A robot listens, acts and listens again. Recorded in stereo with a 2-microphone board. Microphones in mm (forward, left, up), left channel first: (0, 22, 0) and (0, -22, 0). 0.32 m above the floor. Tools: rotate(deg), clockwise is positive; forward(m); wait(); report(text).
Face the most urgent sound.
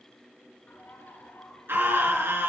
rotate(60)
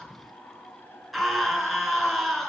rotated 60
report("Found it: a scream, straight ahead.")